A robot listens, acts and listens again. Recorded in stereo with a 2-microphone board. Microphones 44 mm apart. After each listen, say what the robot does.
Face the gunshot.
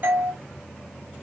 Keep listening.
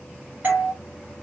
Keep listening.
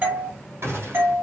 Turn 65° right.
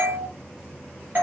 Keep listening.
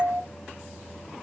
I heard a gunshot, but can't make it out now. It was about straight ahead or 50° right.